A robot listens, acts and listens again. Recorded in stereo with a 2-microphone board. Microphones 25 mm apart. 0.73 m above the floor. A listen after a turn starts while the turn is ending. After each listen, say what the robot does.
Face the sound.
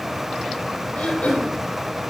Turn 65° left.
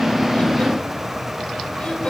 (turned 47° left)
Keep listening.
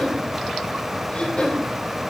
Turn 65° left.
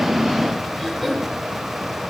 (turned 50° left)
Turn 10° left.
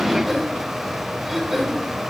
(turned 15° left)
Facing the throat clearing.